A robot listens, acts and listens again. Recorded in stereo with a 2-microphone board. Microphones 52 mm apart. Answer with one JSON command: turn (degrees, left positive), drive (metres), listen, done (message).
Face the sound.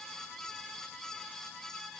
{"listen": true}
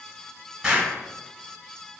{"turn": -15}
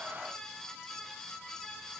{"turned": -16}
{"listen": true}
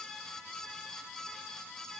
{"done": "I heard an explosion, but can't make it out now. It was about straight ahead or 145° right."}